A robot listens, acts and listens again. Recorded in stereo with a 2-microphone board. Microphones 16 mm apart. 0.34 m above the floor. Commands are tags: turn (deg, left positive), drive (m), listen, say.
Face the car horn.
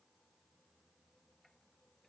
<listen/>
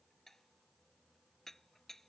<listen/>
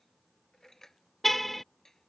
<turn deg="30"/>
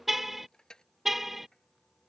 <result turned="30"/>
<turn deg="-15"/>
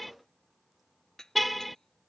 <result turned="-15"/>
<say>Found it: a car horn, straight ahead.</say>